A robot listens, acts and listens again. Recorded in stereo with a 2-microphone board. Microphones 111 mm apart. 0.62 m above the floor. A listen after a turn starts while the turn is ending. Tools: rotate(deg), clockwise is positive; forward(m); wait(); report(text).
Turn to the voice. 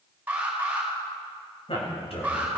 rotate(-60)
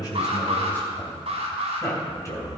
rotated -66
rotate(-30)
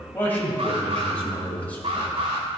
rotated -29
rotate(-15)
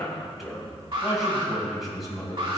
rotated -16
report("Facing the man speaking, 2 to 4 m away.")